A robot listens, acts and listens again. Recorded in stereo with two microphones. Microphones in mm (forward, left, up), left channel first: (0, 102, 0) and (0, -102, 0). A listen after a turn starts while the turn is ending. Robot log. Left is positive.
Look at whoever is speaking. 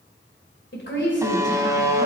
note: The woman speaking: about 65° left or 115° left.
cmd yaw +65
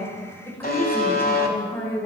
note: So it is at 10° left.
cmd yaw +10
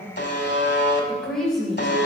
end: Found it: a woman speaking, straight ahead.